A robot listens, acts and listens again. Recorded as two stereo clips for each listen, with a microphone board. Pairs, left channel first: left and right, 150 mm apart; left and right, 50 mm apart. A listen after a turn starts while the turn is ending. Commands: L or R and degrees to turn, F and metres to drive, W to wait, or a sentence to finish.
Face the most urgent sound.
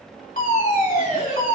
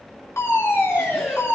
L65
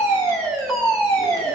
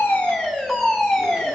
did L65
Facing the fire alarm.